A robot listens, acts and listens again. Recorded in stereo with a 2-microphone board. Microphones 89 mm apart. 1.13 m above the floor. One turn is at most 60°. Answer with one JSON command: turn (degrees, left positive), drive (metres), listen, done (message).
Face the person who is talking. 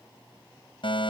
{"listen": true}
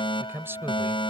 {"turn": -25}
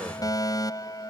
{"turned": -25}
{"listen": true}
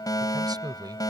{"turn": -60}
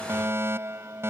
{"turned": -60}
{"turn": -60}
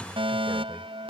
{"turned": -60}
{"turn": -10}
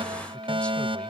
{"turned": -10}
{"done": "Facing where the man speaking came from. I can't hear it now."}